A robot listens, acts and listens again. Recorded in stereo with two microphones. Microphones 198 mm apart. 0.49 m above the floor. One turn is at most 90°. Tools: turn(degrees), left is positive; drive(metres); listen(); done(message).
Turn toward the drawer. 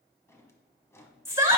turn(degrees=30)
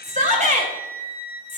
listen()
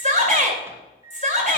listen()
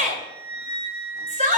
done("I heard a drawer, but can't make it out now. It was about 15° right or 135° left.")